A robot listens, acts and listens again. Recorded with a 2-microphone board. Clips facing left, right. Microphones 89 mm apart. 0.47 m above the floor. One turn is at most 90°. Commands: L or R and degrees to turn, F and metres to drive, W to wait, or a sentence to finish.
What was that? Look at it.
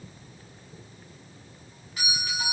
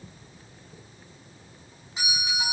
R20
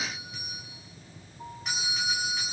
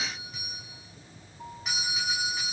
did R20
Facing the doorbell, over 4 m away.